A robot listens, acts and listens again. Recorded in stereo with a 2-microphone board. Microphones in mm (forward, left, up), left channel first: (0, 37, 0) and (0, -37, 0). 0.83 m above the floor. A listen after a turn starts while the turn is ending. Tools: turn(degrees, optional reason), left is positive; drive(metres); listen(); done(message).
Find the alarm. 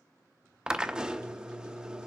listen()
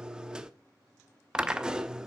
listen()
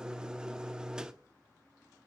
done("I can't make out an alarm, only a drill.")